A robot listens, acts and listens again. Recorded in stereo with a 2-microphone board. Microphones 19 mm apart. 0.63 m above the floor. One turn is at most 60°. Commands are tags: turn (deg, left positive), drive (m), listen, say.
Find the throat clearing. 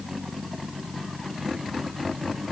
<listen/>
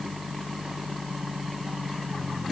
<listen/>
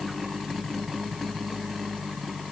<say>I can't make out throat clearing.</say>